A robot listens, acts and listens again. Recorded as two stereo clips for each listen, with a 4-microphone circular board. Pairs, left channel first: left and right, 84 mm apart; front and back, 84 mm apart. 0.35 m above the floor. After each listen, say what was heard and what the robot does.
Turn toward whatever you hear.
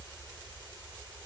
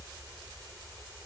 Keep listening.
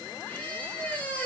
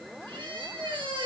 The squeak: 160° left. Turn 160° left.
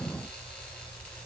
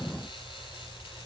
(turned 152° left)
Nothing new. It was at 10° left. Turn 10° left.
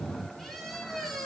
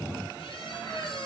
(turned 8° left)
Facing the squeak.